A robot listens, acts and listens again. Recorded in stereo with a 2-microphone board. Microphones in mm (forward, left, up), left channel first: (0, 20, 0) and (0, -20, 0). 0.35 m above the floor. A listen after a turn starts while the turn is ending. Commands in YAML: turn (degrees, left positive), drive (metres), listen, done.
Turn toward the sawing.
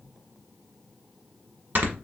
listen: true
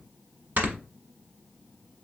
listen: true
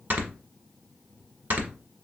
done: "I can't make out sawing, only snoring."